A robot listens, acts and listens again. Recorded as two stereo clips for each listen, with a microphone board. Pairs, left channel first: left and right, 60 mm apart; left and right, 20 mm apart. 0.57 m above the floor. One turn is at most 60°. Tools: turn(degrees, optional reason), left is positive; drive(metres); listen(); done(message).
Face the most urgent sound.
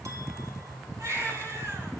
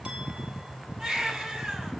turn(degrees=-60, reason="The baby crying: about 60° right or 120° right.")
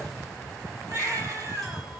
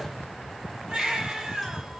turn(degrees=-55, reason="So it is at 55° right.")
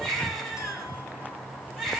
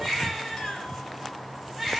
done("Facing the baby crying.")